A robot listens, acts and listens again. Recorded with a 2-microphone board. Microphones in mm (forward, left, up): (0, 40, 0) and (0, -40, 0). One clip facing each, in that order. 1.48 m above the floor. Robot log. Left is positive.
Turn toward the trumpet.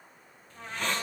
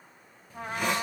note: The trumpet: about 45° right or 135° right.
cmd yaw -45
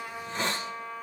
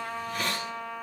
note: So it is at 90° right.
cmd yaw -90
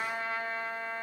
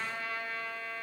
note: The trumpet is now 25° left.
cmd yaw +25
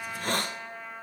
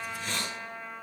end: Found it: a trumpet, straight ahead.